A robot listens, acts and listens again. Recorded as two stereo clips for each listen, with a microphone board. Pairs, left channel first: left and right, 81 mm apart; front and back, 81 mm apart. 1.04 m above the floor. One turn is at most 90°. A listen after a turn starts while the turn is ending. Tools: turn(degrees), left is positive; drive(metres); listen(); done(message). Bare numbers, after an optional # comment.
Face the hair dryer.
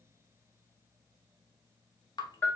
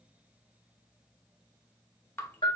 listen()
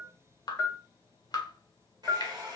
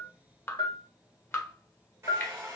# The hair dryer: 125° right.
turn(-90)
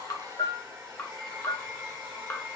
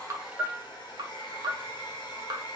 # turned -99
# The hair dryer is now 30° right.
turn(-30)
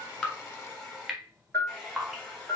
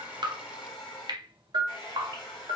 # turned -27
done("Found it: a hair dryer, straight ahead.")